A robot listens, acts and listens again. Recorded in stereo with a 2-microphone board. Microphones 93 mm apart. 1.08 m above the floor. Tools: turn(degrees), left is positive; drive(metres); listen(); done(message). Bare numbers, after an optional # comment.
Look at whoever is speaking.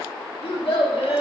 turn(90)
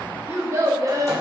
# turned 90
# So it is at 45° right.
turn(-45)
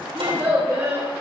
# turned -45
# The child speaking is now 35° right.
turn(-35)
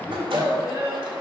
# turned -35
# The child speaking is now 25° right.
turn(-25)
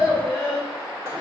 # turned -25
done("Facing the child speaking, 2 to 4 m away.")